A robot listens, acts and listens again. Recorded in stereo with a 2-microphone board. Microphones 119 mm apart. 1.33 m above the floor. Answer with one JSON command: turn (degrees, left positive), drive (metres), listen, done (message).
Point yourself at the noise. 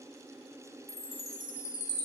{"turn": 25}
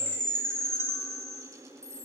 {"turn": 10}
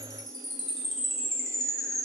{"done": "Found it: a chime, straight ahead."}